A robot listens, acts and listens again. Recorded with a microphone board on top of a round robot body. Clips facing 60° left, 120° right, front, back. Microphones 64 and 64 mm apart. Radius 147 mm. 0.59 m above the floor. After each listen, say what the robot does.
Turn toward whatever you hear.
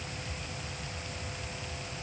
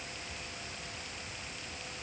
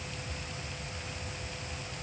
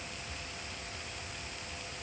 Keep listening.
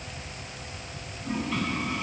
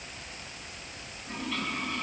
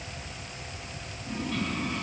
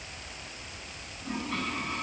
Turn 135° left.
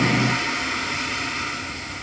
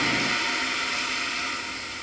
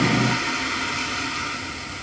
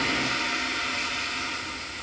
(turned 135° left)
Facing the toilet flushing.